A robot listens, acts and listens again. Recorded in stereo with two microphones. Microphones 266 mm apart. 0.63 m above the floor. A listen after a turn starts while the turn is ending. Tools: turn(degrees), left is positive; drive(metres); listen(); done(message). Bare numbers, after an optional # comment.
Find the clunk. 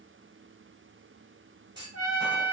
# The clunk: about 15° right or 165° right.
turn(-15)
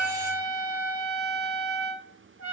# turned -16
listen()
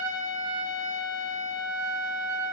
done("I heard a clunk, but can't make it out now. It was about straight ahead or 150° right.")